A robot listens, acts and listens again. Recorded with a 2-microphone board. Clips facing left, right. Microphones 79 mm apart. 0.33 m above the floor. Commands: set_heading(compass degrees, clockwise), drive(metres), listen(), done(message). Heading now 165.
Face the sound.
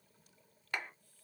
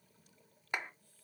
set_heading(185)
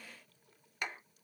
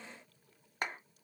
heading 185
set_heading(320)
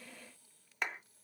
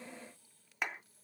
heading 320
done("Facing the clap, 1 to 2 m away.")